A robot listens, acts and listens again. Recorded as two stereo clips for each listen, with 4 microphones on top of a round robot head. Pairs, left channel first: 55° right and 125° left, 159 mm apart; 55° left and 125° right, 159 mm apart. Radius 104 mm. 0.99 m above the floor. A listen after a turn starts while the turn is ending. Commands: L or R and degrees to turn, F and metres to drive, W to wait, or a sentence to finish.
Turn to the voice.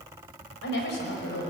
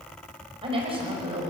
R65
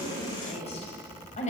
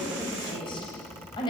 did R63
Facing the woman speaking, over 4 m away.